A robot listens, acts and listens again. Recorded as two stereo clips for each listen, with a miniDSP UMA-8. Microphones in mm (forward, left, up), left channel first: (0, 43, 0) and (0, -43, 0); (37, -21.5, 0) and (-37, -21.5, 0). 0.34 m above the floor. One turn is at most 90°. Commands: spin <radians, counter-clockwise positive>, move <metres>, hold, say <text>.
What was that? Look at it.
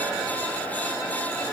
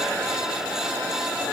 hold
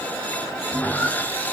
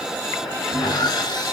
spin 0.35
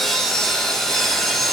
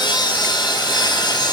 say Found it: sawing, straight ahead.